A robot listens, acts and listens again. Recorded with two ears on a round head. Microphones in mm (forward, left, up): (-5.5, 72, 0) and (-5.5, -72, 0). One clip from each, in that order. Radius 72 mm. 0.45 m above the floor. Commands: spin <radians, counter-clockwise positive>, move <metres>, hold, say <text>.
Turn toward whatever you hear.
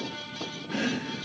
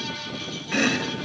spin -0.70
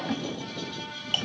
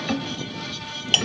spin -1.75
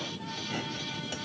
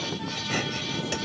hold
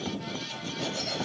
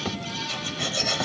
spin -0.61
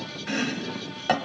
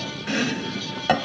say Found it: chopping, straight ahead.